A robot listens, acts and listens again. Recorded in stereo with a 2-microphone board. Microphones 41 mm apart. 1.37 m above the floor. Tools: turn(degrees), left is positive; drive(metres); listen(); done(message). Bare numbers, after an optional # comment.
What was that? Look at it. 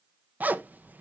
# The zipper: about 45° right or 135° right.
turn(-45)
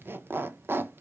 # So it is at 85° right.
turn(-85)
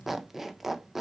done("Facing the zipper, under 1 m away.")